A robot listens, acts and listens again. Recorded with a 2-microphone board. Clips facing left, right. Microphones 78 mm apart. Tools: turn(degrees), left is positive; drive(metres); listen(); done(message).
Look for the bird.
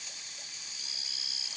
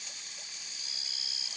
listen()
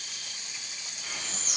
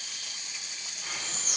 turn(degrees=-45)
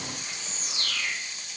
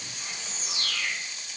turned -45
done("Facing the bird, 1 to 2 m away.")